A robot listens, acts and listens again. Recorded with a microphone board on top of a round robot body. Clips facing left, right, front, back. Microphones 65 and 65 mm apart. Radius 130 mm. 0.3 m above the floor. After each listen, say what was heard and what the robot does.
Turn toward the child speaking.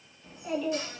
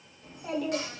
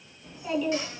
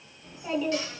The child speaking: 115° right. Turn 115° right.
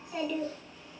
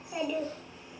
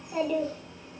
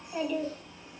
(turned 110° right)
The child speaking is now 20° right. Turn 20° right.
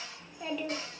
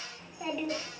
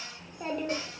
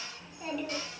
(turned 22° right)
The child speaking is now 15° right. Turn 15° right.
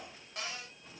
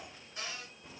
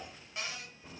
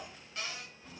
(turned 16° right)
The child speaking is now 45° right. Turn 45° right.
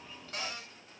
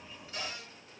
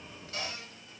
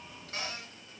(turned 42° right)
The child speaking is now 35° right. Turn 35° right.
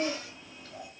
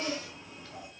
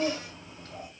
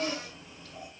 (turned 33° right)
The child speaking is now 15° right. Turn 15° right.
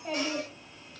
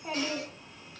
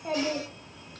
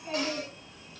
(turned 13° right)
Found it: a child speaking, straight ahead, 1 to 2 m away.